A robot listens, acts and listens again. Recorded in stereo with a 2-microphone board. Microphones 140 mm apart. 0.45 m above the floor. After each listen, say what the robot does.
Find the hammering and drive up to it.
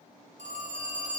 Keep listening.
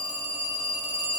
Keep listening.
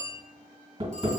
Turn 40° right.
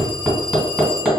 Drive 1.0 m forward.
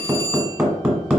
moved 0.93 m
Turn 10° right.
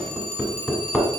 Drive 1.0 m forward.
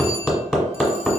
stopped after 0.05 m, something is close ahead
I am next to the hammering.